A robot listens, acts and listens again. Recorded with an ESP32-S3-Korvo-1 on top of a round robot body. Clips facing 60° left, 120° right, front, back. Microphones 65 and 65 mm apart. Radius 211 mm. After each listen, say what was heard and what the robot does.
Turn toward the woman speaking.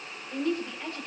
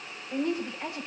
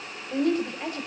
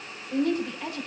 The woman speaking: 45° right. Turn 45° right.
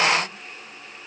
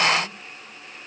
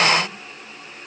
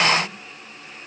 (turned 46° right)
Keep listening.
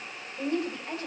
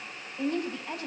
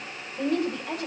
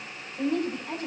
Found it: a woman speaking, straight ahead.